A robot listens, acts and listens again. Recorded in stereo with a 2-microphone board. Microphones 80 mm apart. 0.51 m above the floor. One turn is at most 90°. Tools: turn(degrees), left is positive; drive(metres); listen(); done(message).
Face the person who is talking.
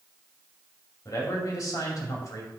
turn(degrees=50)
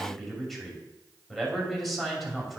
done("Found it: a man speaking, straight ahead.")